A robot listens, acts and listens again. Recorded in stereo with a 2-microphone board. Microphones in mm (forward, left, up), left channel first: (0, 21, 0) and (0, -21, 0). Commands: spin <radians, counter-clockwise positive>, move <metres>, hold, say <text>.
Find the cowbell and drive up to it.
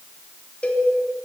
spin 0.52
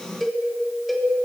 move 1.0
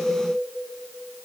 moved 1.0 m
hold
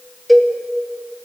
move 1.0
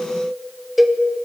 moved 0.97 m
move 1.0
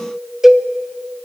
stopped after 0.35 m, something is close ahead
say I am next to the cowbell.